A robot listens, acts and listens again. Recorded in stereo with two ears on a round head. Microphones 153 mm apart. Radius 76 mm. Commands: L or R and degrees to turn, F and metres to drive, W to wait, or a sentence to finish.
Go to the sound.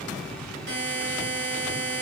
R70
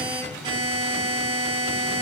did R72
R30
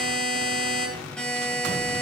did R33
F1.0
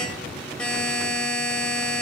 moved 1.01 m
F1.0
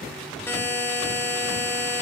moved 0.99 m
L15
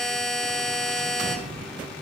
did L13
F1.0
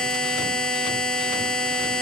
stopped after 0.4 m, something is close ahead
L10
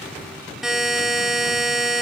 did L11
I am next to the buzzer.